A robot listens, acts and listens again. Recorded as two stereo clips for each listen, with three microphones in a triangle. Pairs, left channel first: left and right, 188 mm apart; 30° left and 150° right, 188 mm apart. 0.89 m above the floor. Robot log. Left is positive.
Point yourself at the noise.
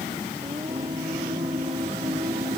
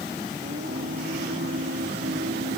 note: The singing: 150° right.
cmd yaw -150
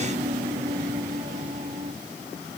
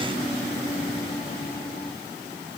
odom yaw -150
note: The singing is now 35° right.
cmd yaw -35
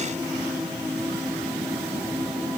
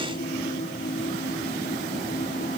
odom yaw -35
end: Facing the singing.